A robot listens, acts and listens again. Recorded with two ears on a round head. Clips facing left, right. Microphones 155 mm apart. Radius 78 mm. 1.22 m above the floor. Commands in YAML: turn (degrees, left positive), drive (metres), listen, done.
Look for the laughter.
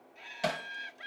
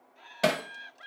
turn: 25
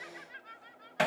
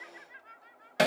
turn: 130
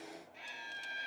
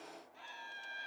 turn: 25
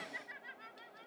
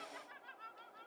turn: 15
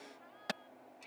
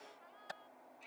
done: "Found it: laughter, straight ahead."